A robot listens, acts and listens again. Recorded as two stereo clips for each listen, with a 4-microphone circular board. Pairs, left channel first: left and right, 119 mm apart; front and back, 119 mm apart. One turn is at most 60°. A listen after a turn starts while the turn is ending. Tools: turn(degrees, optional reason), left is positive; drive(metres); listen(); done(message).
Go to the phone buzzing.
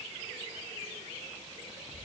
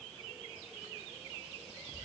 listen()
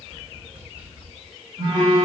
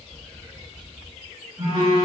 turn(degrees=-60, reason="The phone buzzing: 150° right.")
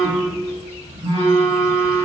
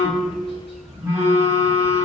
turn(degrees=-60, reason="The phone buzzing is now 110° right.")
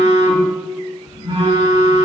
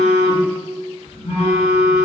turn(degrees=-30, reason="The phone buzzing is now 30° right.")
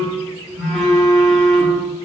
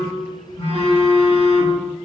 drive(metres=1.0)
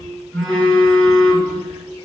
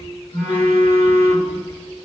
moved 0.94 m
turn(degrees=15, reason="The phone buzzing is now 15° left.")
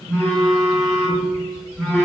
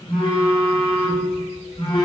drive(metres=1.0)
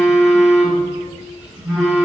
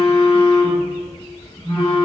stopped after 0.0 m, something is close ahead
done("I am next to the phone buzzing.")